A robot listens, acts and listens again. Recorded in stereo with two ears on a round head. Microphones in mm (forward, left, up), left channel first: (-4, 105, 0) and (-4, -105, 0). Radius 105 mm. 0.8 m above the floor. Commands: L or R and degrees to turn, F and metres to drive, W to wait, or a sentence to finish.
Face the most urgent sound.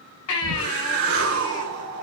L90
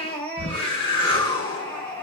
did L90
Found it: a baby crying, straight ahead.